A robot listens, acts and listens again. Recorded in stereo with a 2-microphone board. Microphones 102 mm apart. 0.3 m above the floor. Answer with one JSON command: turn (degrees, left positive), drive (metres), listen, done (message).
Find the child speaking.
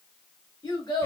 {"turn": 45}
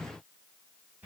{"listen": true}
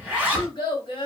{"turn": 75}
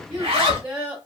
{"turn": -10}
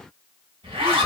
{"listen": true}
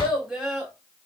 {"done": "Found it: a child speaking, straight ahead."}